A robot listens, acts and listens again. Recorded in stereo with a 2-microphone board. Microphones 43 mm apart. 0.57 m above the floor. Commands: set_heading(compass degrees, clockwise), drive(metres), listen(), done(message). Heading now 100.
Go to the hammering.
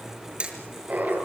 set_heading(125)
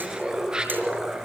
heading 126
listen()
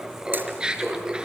listen()
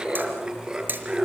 set_heading(256)
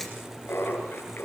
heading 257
listen()
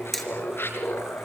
drive(1.0)
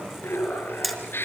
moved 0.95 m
drive(1.0)
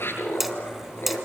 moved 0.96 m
drive(1.0)
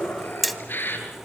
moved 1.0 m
drive(1.0)
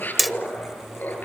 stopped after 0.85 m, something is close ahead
done("I am next to the hammering.")